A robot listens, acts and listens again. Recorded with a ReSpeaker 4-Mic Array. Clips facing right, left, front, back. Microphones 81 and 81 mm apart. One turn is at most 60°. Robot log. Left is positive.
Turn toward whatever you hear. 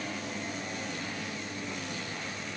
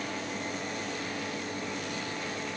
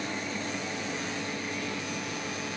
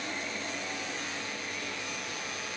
cmd idle
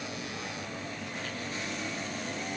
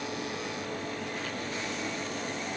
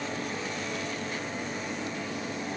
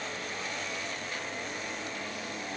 cmd idle
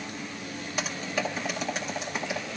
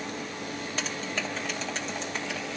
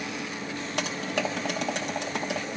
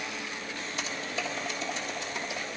note: The typing on a keyboard: 10° right.
cmd yaw -10
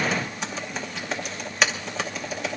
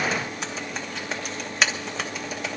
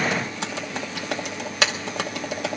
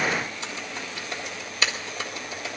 end: Found it: typing on a keyboard, straight ahead, 1 to 2 m away.